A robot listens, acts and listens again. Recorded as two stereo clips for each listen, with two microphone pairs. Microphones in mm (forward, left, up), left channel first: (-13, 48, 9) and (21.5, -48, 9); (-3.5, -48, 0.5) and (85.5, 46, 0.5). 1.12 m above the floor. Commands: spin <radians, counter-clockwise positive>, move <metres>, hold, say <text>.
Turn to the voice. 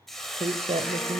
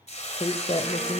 spin -1.48
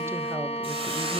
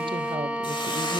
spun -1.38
hold
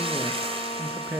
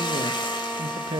say Found it: a woman speaking, straight ahead.